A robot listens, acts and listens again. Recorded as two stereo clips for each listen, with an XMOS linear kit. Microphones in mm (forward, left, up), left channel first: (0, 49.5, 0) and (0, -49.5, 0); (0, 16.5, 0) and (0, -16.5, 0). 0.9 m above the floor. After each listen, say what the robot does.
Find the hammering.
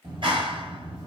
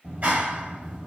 Keep listening.
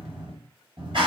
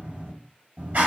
Keep listening.
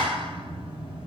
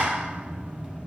I can't make out hammering, only a clap.